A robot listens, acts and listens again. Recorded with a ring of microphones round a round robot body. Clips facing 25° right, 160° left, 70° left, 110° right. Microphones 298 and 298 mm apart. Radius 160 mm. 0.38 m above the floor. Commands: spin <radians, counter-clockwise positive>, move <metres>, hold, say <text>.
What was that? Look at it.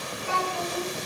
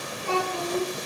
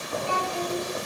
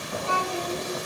spin -2.62
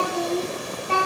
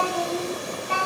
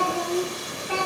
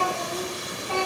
spin -0.35
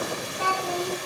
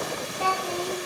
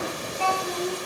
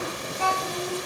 spin 0.17
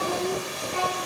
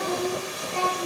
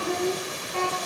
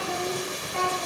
spin 0.17
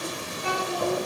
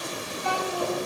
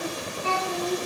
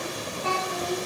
say Facing the child speaking, 2 to 4 m away.